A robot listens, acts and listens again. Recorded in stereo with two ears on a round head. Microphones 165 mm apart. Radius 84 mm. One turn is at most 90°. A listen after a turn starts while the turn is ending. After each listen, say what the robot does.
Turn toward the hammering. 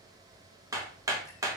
Turn 20° right.
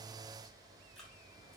Keep listening.
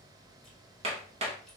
Turn 90° right.
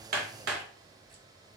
Turn 75° right.
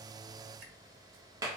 Turn 20° right.
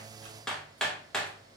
Found it: hammering, straight ahead.